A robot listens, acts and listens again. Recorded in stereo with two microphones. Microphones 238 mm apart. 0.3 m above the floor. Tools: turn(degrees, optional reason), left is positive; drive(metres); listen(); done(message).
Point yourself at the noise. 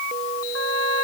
turn(degrees=-70, reason="The trumpet: about 70° right or 110° right.")
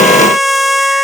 done("Found it: a trumpet, straight ahead.")